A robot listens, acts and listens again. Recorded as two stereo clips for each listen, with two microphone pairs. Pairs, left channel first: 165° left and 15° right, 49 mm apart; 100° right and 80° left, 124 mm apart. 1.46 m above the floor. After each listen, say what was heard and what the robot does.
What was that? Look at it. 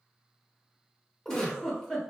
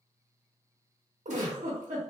The giggle: 85° left. Turn 85° left.
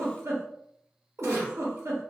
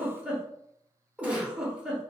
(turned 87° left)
Found it: a giggle, straight ahead, under 1 m away.